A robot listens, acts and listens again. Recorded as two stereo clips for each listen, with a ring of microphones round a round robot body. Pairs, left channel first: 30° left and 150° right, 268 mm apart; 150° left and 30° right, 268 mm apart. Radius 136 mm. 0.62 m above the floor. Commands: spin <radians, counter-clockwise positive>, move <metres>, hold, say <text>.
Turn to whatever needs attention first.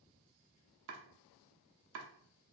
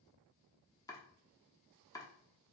hold
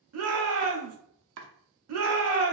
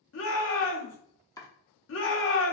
spin -3.05
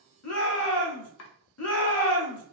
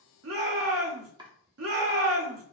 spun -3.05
say Facing the shout, 1 to 2 m away.